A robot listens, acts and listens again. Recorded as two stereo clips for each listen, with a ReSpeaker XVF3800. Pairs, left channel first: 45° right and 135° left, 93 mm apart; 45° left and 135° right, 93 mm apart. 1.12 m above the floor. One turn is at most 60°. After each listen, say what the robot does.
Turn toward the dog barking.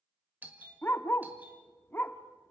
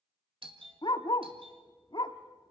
Turn 20° left.
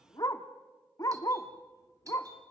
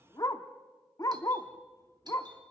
Found it: a dog barking, straight ahead.